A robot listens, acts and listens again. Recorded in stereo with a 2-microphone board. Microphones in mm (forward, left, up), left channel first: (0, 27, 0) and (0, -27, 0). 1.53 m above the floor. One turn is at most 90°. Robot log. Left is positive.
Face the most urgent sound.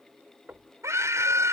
note: The scream: about 65° right or 115° right.
cmd yaw -65
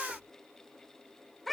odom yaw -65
end: Found it: a scream, straight ahead.